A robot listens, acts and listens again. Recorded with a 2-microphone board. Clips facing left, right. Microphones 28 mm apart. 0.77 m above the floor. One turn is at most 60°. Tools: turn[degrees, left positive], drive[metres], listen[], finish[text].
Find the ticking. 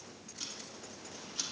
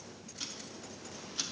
Action: turn[-30]
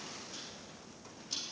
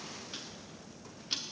Thought: So it is at 140° right.
Action: turn[-60]
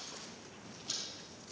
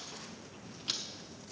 Thought: The ticking is now 70° right.
Action: turn[-60]
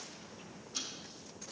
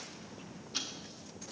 Thought: The ticking is now 35° right.
Action: turn[-35]
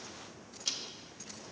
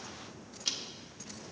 Thought: The ticking is now 20° right.
Action: turn[-20]
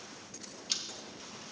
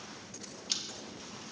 Action: finish[Found it: ticking, straight ahead.]